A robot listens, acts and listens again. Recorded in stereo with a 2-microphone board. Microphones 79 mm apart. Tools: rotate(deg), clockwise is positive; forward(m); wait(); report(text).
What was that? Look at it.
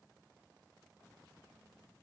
wait()
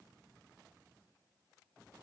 wait()
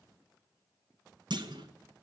rotate(65)
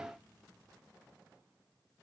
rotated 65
wait()
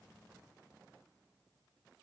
report("I heard a clunk, but can't make it out now. It was about straight ahead or 50° right.")